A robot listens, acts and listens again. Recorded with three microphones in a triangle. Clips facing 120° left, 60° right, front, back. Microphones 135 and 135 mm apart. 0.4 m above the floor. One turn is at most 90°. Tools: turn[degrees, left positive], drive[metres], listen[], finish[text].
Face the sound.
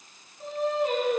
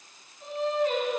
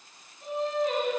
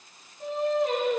Thought: The singing: 160° left.
Action: turn[90]
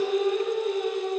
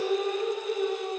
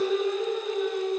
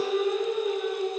Thought: The singing is now 95° left.
Action: turn[90]
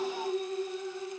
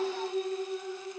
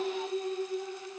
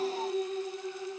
Thought: The singing is now 15° left.
Action: turn[15]
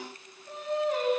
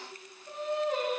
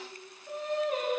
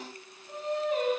Action: finish[Facing the singing.]